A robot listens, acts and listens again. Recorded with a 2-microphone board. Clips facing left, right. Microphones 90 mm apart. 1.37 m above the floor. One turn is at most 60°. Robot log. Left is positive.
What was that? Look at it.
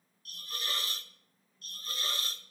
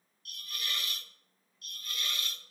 note: The hiss: about 35° left or 145° left.
cmd yaw +35
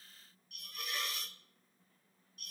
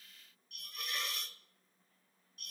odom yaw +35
end: Found it: a hiss, straight ahead, 1 to 2 m away.